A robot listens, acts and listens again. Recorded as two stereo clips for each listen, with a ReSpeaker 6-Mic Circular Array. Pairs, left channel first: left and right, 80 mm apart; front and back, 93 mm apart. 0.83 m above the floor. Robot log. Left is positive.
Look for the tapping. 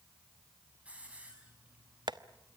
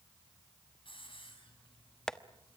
note: The tapping: 80° right.
cmd yaw -80
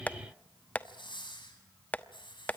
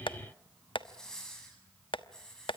note: The tapping is now 20° left.
cmd yaw +20
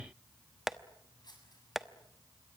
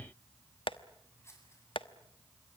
end: Found it: tapping, straight ahead.